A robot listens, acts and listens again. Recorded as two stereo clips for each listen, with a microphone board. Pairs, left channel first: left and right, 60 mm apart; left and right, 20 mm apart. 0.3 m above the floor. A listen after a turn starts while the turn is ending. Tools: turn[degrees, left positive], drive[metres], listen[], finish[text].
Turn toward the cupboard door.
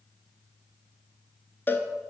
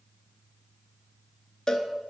Action: listen[]
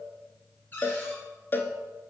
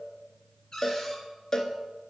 Thought: The cupboard door: about 35° left or 145° left.
Action: turn[35]
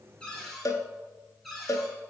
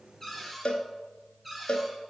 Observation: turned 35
Action: finish[Facing the cupboard door, 2 to 4 m away.]